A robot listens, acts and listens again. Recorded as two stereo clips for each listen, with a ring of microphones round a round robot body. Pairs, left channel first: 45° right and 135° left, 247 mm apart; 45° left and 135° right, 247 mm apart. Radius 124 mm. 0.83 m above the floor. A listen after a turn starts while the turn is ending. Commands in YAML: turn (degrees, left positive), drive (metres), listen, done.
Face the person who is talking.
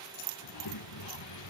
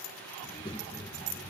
turn: -25
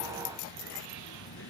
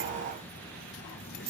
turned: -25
done: "Facing the child speaking."